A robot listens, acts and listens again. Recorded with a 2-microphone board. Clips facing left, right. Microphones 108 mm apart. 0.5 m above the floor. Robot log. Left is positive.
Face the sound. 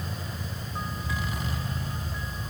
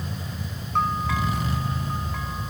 cmd yaw -90
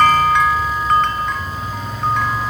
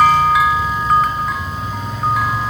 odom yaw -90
end: Found it: a bell, straight ahead.